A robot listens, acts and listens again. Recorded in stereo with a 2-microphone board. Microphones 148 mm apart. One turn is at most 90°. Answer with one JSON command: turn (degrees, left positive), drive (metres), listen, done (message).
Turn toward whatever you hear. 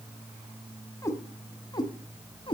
{"turn": 35}
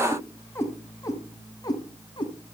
{"turn": 30}
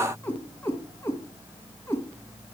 {"turn": 15}
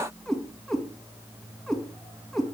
{"done": "Facing the cat meowing, 2 to 4 m away."}